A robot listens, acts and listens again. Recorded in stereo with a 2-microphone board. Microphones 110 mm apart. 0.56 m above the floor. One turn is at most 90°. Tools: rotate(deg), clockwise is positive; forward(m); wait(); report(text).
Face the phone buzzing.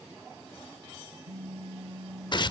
rotate(60)
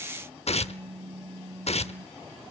rotate(55)
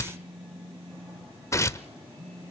rotate(10)
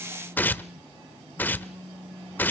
report("Facing the phone buzzing.")